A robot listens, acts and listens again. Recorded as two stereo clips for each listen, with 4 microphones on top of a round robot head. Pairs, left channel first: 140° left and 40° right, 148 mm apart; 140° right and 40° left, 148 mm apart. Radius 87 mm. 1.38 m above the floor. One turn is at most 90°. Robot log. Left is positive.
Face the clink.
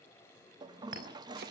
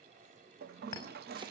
note: The clink: 70° right.
cmd yaw -70
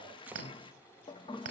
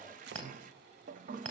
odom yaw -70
note: The clink is now 15° right.
cmd yaw -15
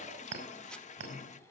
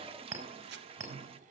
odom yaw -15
end: Facing the clink, over 4 m away.